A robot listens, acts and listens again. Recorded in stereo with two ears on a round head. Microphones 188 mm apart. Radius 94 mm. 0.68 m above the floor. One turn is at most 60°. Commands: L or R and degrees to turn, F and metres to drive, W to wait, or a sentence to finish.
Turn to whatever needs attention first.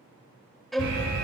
R60
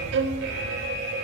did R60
R55
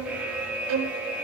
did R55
Facing the alarm, 2 to 4 m away.